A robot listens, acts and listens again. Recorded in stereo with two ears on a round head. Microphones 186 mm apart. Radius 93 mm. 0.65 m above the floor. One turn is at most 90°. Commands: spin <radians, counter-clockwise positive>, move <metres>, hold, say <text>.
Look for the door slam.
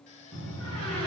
spin -1.57
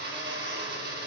say Facing where the door slam came from. I can't hear it now.